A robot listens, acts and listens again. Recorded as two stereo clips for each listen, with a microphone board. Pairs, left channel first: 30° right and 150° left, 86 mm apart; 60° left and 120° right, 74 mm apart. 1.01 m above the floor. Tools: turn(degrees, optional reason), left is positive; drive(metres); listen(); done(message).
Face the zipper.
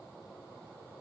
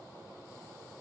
listen()
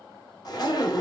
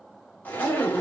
done("Facing the zipper, under 1 m away.")